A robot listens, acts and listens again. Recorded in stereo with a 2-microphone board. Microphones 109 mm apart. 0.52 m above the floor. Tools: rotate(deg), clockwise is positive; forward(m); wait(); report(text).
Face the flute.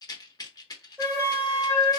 rotate(20)
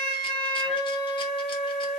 report("Facing the flute.")